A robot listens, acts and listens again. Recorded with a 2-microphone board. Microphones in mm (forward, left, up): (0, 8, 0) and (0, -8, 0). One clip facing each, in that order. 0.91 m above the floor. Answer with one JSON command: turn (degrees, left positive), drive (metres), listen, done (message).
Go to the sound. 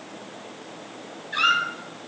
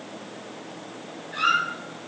{"turn": 35}
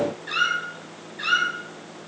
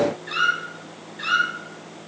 {"drive": 1.0}
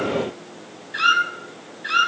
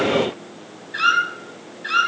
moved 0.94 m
{"drive": 1.0}
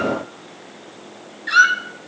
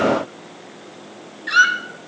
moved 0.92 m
{"drive": 1.0}
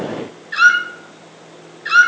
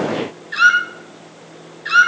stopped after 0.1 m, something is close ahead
{"done": "I am next to the squeak."}